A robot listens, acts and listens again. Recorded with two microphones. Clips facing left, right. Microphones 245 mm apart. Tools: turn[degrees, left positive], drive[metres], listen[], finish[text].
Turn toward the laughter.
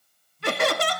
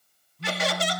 Thought: The laughter: about 60° left or 120° left.
Action: turn[60]
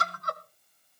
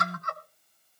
Thought: So it is at 35° left.
Action: turn[35]
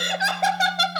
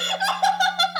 Thought: The laughter is now 30° left.
Action: turn[30]
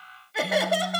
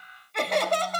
Thought: The laughter is now 10° left.
Action: turn[10]
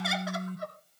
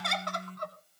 Thought: The laughter is now 10° left.
Action: turn[10]
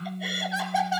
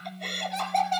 Action: finish[Facing the laughter, 2 to 4 m away.]